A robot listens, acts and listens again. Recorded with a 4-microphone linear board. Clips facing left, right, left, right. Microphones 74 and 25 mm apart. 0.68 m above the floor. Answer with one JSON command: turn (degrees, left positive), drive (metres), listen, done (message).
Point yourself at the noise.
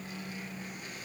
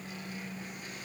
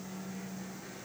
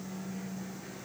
{"listen": true}
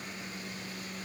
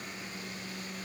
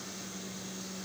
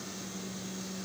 {"listen": true}
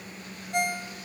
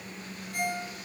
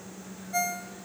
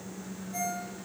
{"turn": 70}
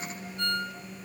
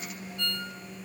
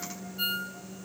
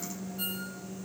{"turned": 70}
{"turn": 35}
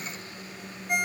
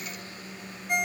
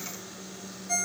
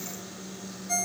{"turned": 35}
{"done": "Facing the ringtone."}